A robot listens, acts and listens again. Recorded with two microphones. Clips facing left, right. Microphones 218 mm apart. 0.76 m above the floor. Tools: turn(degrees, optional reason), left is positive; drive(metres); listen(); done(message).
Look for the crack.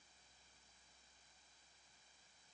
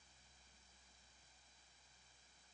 listen()
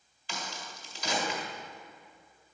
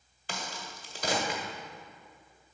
turn(degrees=-55, reason="The crack: about 55° right or 125° right.")
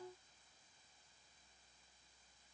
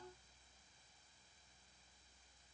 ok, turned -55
listen()
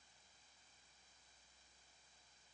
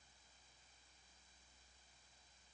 done("I heard a crack, but can't make it out now. It was about straight ahead or 70° right.")